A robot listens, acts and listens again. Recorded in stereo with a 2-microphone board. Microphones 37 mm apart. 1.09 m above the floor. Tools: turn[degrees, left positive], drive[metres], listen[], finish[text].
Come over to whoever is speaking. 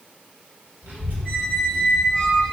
Action: turn[-90]
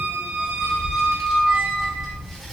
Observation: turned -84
Action: drive[1.0]
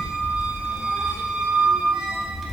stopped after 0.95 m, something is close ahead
Action: finish[I am next to the child speaking.]